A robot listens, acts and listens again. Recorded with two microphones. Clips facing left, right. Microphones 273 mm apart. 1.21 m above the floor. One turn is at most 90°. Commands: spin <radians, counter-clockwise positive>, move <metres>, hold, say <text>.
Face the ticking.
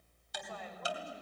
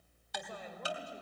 spin -1.13
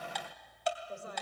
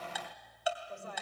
say Facing the ticking.